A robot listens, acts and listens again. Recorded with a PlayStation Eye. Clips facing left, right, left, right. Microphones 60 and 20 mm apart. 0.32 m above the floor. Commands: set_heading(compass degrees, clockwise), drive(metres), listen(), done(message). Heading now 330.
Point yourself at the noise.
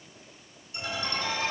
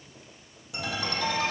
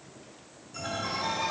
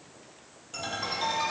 set_heading(60)
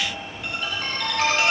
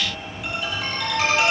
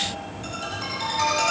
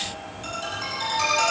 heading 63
done("Facing the ringtone.")